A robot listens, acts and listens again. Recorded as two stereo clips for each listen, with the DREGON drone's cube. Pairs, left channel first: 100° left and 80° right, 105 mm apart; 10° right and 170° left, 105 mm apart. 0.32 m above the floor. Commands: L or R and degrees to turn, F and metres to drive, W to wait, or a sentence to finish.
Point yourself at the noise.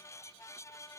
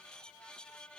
W
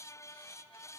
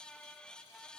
W
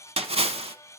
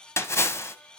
R75
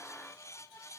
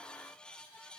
Facing where the splash came from. I can't hear it now.